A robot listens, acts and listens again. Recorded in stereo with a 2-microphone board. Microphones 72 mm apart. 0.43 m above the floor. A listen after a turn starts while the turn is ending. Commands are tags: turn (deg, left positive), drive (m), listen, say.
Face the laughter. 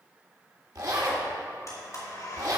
<listen/>
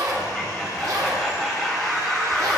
<turn deg="30"/>
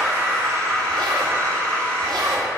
<turn deg="-30"/>
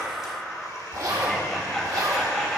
<say>Facing the laughter.</say>